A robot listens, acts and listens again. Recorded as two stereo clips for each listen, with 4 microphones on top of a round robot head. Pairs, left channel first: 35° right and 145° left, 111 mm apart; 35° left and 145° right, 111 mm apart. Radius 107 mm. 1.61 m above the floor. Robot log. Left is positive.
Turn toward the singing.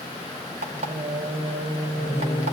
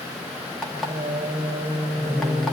note: The singing: 170° right.
cmd yaw -170
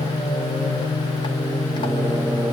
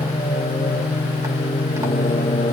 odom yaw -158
note: The singing is now 50° left.
cmd yaw +50
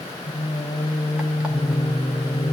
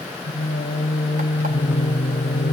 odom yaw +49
note: The singing is now 30° left.
cmd yaw +30
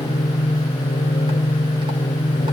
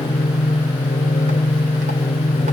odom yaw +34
end: Found it: singing, straight ahead, 1 to 2 m away.